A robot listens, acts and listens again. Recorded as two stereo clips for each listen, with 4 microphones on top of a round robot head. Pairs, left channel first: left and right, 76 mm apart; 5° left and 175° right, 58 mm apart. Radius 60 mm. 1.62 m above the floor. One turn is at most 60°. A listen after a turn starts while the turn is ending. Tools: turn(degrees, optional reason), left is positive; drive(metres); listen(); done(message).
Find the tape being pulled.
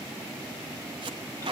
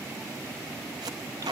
turn(degrees=-60, reason="The tape being pulled: 135° right.")
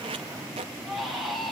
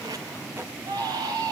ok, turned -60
turn(degrees=-60, reason="Nothing new. It was at 75° right.")
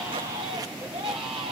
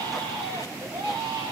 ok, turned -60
turn(degrees=-15, reason="Nothing new. It was at 15° right.")
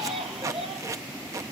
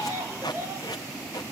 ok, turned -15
turn(degrees=-45, reason="The tape being pulled is now 45° right.")
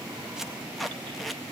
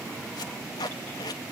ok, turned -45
done("Found it: tape being pulled, straight ahead.")